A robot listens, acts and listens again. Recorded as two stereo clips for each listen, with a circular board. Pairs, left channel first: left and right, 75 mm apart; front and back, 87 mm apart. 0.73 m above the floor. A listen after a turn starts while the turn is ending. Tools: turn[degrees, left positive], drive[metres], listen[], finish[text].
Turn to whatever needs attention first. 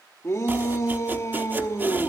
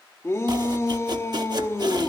Thought: The shout: 50° left.
Action: turn[50]
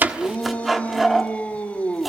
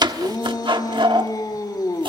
Thought: The shout is now 20° left.
Action: turn[20]
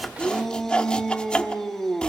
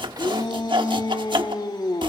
Action: finish[Found it: a shout, straight ahead.]